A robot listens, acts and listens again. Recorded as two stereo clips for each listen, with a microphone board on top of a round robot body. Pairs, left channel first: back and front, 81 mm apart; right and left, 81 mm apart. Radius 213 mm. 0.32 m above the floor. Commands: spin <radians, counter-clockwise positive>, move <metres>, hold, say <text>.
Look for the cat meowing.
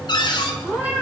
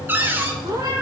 spin 1.31
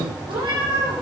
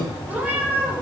spin 0.35
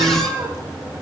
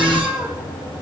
say Facing the cat meowing.